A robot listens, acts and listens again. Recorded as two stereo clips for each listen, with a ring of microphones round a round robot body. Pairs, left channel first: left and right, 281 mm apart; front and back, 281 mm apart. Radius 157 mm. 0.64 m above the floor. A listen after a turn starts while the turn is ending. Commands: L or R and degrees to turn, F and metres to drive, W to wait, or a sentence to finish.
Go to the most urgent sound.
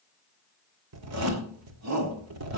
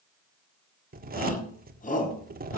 R60
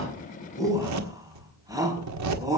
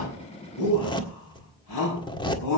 R10
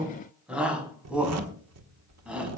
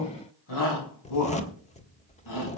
F1.0
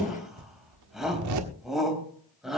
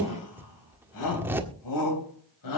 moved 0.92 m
F1.0
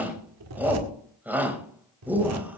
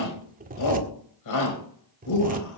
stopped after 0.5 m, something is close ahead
Something is in my way. I am facing the shout but have not reached it.